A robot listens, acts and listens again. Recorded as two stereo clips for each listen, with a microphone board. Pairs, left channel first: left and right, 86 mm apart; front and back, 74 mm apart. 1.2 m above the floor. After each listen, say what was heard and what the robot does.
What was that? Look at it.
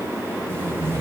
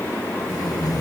The tape being pulled: 25° right. Turn 25° right.
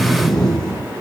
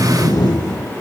Facing the tape being pulled, over 4 m away.